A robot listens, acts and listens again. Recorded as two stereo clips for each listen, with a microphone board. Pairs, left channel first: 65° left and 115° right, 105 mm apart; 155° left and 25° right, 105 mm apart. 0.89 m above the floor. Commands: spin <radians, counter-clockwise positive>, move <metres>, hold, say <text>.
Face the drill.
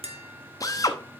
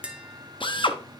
spin 2.18
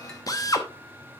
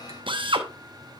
spin 0.26
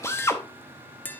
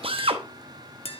say Facing the drill.